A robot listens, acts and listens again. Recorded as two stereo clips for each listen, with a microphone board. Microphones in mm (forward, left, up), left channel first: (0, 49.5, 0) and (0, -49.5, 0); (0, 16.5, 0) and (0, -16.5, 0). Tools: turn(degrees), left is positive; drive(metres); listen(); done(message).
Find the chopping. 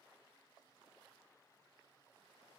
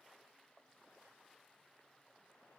listen()
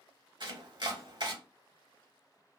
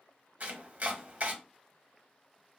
turn(degrees=-55)
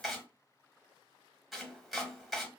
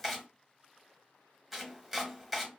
done("Found it: chopping, straight ahead, under 1 m away.")